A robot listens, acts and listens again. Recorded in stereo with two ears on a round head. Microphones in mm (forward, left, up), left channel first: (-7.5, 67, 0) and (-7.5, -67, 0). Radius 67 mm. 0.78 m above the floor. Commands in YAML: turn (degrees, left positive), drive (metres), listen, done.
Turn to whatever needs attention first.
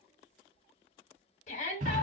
turn: 50
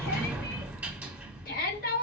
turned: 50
turn: 75
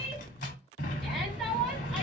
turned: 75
done: "Facing the shout."